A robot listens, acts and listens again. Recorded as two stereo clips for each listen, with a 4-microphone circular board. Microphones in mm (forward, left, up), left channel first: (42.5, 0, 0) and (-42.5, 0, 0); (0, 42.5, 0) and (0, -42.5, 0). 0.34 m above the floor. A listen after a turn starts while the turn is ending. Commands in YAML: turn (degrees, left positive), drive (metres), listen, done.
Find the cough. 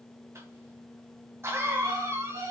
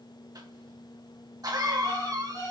turn: -125
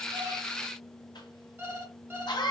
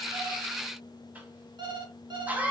turn: -20
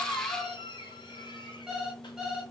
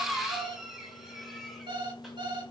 done: "Facing the cough."